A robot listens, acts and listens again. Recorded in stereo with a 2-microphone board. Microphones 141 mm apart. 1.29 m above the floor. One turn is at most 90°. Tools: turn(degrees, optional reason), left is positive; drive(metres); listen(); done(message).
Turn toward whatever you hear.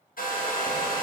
turn(degrees=70, reason="The hair dryer: about 70° left or 110° left.")
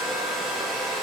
done("Found it: a hair dryer, straight ahead.")